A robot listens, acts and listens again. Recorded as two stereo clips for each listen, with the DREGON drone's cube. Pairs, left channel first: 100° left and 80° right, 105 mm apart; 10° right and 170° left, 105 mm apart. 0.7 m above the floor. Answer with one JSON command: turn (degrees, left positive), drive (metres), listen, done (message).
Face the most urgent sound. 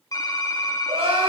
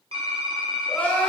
{"turn": -85}
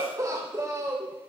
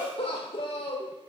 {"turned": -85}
{"turn": -25}
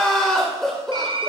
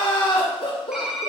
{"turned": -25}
{"turn": 15}
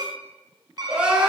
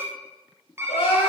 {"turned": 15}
{"done": "Found it: crying, straight ahead."}